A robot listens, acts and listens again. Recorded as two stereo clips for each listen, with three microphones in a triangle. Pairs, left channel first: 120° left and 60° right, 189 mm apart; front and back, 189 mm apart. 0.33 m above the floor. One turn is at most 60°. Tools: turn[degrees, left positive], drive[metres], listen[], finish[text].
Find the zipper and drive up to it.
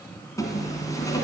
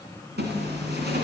Thought: The zipper: 170° right.
Action: turn[-60]
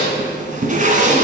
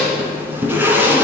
Thought: The zipper is now 105° right.
Action: turn[-60]
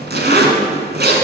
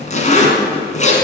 Thought: The zipper is now 45° right.
Action: turn[-45]
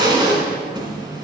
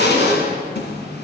Action: drive[1.0]
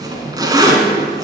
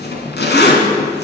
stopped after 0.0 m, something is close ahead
Action: finish[Something is in my way. I am facing the zipper but have not reached it.]